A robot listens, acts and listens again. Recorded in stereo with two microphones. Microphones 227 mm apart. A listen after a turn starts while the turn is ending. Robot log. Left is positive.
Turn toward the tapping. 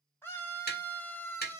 note: The tapping: about 45° left or 135° left.
cmd yaw +45
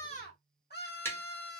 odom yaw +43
note: So it is at 15° left.
cmd yaw +15
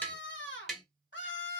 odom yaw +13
end: Found it: tapping, straight ahead.